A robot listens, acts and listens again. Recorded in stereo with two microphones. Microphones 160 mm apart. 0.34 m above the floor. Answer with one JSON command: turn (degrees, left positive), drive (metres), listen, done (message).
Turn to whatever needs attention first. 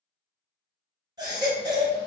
{"turn": -25}
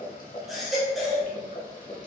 {"done": "Found it: a baby crying, straight ahead, 1 to 2 m away."}